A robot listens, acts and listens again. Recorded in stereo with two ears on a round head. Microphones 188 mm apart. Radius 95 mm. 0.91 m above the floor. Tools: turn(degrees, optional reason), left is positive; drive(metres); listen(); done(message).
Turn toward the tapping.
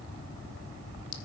listen()
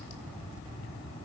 listen()
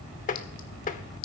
turn(degrees=40, reason="The tapping: about 40° left or 140° left.")
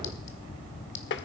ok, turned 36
turn(degrees=95, reason="So it is at 95° left.")
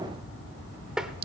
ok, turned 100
done("Found it: tapping, straight ahead.")